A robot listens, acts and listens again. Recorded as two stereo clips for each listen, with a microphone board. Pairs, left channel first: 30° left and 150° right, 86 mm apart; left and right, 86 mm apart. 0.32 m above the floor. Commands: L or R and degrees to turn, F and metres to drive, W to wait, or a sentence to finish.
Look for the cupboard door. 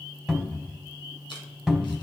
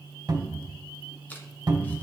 R65
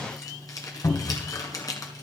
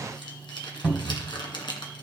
R10
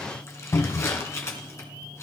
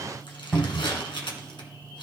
Found it: a cupboard door, straight ahead.